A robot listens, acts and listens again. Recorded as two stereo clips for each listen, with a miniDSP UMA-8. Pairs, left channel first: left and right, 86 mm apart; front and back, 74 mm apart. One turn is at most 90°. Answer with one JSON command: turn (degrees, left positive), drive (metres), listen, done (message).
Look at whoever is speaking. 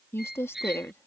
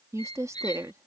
{"turn": 90}
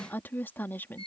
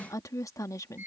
{"turn": 30}
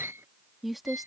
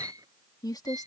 {"done": "Found it: a woman speaking, straight ahead."}